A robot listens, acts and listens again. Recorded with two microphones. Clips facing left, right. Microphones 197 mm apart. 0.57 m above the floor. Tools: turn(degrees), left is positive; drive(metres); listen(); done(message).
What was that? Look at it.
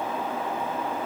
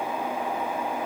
listen()
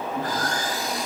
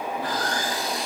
turn(degrees=45)
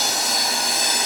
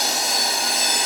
done("Facing the sawing, 2 to 4 m away.")